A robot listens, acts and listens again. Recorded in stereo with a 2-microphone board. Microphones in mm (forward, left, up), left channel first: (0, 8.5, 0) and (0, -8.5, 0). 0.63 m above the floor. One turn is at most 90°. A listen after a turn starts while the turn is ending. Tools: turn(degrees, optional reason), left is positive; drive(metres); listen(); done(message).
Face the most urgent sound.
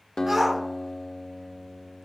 turn(degrees=-20, reason="The shout: about 20° right or 160° right.")
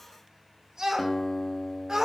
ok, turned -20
turn(degrees=-90, reason="So it is at 135° right.")
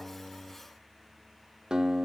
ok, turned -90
turn(degrees=-45, reason="Nothing new. It was at 45° right.")
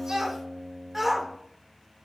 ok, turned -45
done("Facing the shout, 1 to 2 m away.")